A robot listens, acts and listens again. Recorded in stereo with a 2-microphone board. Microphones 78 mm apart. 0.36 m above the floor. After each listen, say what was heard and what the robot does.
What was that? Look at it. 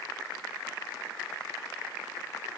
Keep listening.
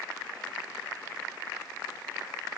Keep listening.
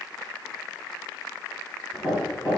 Turn 30° left.
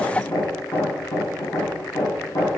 So it is at 145° left. Turn 145° left.
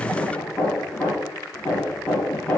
The hammering is now 15° left. Turn 15° left.
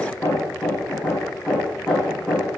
Facing the hammering, over 4 m away.